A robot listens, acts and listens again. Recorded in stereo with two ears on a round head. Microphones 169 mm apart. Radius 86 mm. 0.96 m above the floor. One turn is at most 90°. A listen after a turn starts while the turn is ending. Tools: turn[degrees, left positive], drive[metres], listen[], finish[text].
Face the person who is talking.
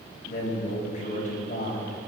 Thought: The man speaking: about 45° left or 135° left.
Action: turn[45]
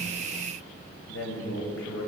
Thought: So it is at 90° left.
Action: turn[90]
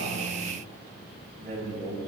Thought: The man speaking is now 30° right.
Action: turn[-30]
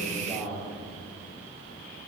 Action: finish[Found it: a man speaking, straight ahead, over 4 m away.]